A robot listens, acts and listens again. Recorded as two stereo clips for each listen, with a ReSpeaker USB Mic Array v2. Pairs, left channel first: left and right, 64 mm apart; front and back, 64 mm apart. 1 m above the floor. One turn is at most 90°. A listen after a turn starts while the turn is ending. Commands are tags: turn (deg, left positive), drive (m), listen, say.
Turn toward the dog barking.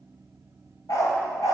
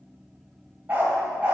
<turn deg="90"/>
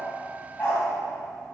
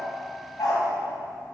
<turn deg="20"/>
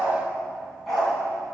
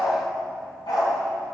<say>Facing the dog barking, over 4 m away.</say>